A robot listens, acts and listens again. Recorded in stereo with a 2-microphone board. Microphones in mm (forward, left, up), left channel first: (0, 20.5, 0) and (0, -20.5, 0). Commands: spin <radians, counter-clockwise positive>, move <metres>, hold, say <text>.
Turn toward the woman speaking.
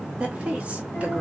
spin -0.61
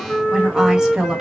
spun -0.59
spin -0.26
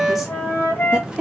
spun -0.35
spin -0.44
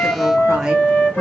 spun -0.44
hold
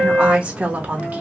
spin -0.61
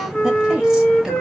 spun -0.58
spin -0.17
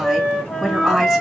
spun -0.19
say Facing the woman speaking.